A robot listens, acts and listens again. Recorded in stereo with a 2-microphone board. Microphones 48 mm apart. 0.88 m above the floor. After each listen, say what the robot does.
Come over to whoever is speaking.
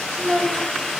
Turn 20° left.
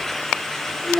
Turn 140° left.
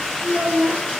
Turn 15° right.
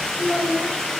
Drive 1.0 m forward.
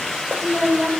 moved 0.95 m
Turn 10° left.
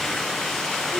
Keep listening.
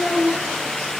Drive 1.0 m forward.
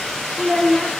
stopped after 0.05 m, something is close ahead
I am next to the child speaking.